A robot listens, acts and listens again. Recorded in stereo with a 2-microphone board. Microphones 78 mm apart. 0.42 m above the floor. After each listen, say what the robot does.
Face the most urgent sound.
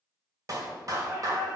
Turn 45° right.
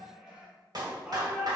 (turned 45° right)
Turn 10° right.
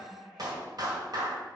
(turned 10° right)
Facing the shout, 1 to 2 m away.